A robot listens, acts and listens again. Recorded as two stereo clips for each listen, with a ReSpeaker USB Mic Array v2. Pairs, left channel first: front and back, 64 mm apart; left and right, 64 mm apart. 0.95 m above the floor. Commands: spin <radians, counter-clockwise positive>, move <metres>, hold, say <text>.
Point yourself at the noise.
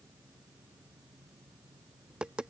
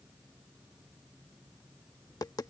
spin 1.83
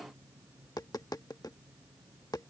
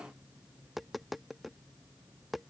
say Facing the tapping.